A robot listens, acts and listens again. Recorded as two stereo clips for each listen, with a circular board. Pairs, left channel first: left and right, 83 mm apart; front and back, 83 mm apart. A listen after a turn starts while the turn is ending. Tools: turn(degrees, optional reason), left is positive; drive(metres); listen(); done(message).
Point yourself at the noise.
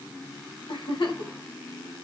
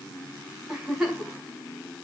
turn(degrees=95, reason="The giggle: 95° left.")
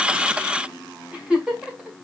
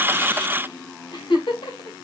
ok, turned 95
turn(degrees=-15, reason="The giggle is now 15° right.")
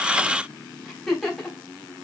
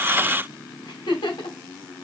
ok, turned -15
done("Found it: a giggle, straight ahead, 2 to 4 m away.")